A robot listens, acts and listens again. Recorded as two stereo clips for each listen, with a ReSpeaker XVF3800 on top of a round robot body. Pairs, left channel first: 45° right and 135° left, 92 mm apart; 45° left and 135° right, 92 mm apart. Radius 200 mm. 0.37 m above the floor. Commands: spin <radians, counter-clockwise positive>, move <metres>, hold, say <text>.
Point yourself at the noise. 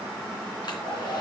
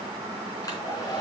say Facing the hair dryer, 2 to 4 m away.